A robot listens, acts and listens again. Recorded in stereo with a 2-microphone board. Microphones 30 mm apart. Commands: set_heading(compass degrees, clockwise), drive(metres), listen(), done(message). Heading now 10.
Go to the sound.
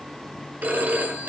set_heading(75)
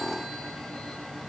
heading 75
listen()
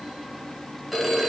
drive(1.0)
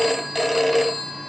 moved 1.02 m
drive(1.0)
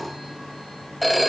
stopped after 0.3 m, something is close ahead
done("Arrived at the phone ringing, straight ahead.")